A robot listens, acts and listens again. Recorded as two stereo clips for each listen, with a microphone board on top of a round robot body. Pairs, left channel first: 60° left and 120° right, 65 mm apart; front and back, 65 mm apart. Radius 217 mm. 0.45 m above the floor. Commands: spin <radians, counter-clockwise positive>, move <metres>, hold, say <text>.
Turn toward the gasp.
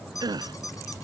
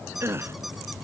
spin -2.27
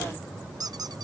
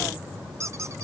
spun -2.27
say I heard a gasp from this way, but can't make it out now.